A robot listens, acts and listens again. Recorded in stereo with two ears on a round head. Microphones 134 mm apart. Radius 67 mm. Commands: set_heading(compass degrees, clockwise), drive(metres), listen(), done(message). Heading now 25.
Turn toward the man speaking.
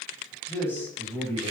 set_heading(355)
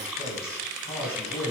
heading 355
set_heading(215)
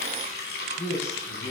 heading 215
set_heading(165)
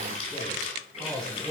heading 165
done("Found it: a man speaking, straight ahead, over 4 m away.")